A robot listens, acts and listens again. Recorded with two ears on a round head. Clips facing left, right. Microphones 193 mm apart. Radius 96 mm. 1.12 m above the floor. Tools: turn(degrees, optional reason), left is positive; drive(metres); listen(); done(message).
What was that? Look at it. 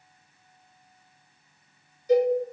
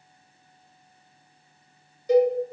turn(degrees=-60, reason="The cowbell: about 60° right or 120° right.")
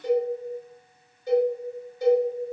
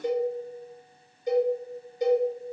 turn(degrees=-20, reason="So it is at 20° right.")
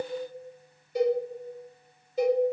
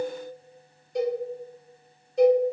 done("Found it: a cowbell, straight ahead.")